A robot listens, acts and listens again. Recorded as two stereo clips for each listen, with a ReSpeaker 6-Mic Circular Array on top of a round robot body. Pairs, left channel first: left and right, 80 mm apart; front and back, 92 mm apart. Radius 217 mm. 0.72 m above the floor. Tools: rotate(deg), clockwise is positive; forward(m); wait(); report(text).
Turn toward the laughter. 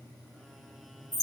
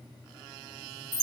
wait()
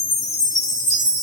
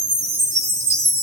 wait()
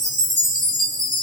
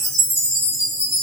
report("I can't make out laughter, only a chime.")